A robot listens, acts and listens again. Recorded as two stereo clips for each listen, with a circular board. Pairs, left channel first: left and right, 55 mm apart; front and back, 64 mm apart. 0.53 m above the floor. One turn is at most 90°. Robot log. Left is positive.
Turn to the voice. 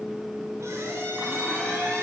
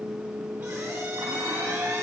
cmd idle
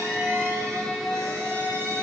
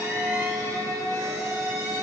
cmd idle
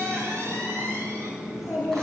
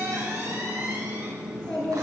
note: The child speaking: 70° left.
cmd yaw +70
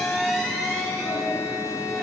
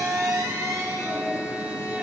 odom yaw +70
cmd idle
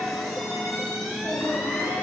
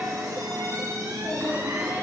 note: The child speaking is now 15° left.
cmd yaw +15
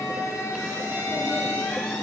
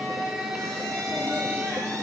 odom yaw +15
cmd idle
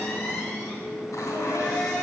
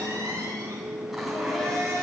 cmd idle
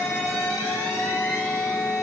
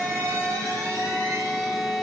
end: Facing where the child speaking came from. I can't hear it now.